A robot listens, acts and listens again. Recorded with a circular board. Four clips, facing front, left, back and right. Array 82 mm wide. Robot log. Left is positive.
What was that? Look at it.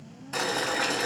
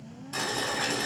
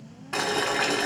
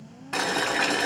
note: The boiling: 135° right.
cmd yaw -135
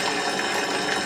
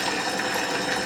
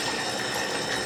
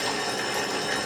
note: The boiling is now 10° left.
cmd yaw +10
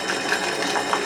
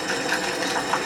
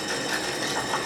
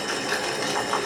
end: Facing the boiling, 2 to 4 m away.